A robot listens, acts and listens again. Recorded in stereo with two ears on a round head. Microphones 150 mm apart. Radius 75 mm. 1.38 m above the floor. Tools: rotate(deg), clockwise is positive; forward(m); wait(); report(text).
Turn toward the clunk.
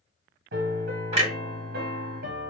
rotate(35)
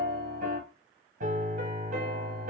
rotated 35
wait()
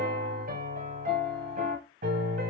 report("I heard a clunk, but can't make it out now. It was about straight ahead or 110° right.")